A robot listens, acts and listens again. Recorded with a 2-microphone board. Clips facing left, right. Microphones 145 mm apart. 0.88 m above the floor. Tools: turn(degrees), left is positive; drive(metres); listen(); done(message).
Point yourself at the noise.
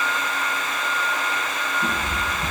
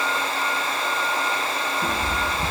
turn(degrees=-55)
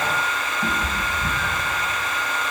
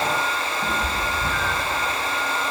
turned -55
turn(degrees=10)
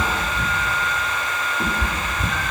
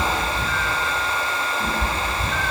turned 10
turn(degrees=45)
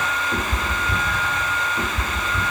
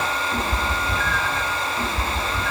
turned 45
turn(degrees=15)
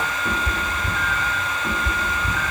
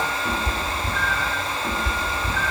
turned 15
done("Facing the cat meowing.")